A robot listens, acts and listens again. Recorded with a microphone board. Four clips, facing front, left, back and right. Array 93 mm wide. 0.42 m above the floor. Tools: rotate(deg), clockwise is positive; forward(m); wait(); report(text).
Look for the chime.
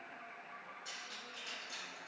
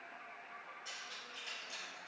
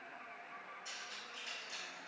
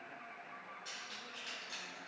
wait()
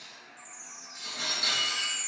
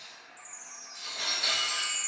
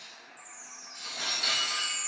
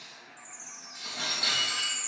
rotate(30)
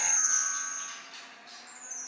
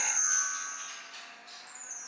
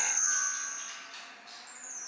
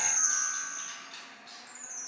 rotate(15)
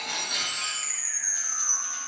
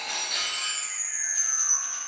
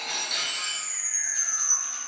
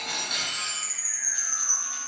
report("Facing the chime.")